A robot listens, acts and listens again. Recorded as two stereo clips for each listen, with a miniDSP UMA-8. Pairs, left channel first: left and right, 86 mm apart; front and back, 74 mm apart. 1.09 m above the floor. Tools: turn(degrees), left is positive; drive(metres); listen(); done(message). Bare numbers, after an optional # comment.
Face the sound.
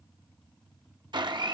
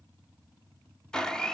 # The blender: 80° right.
turn(-80)
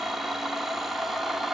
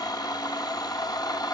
done("Found it: a blender, straight ahead.")